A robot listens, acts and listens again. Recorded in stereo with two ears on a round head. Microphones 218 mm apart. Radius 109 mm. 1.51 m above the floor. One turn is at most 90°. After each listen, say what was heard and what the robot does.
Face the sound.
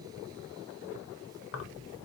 The keys jangling: about 55° left or 125° left. Turn 55° left.
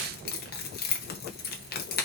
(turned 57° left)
So it is at 50° left. Turn 50° left.
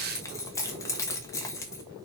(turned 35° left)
The keys jangling is now 15° left. Turn 15° left.
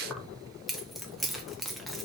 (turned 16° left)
Found it: keys jangling, straight ahead.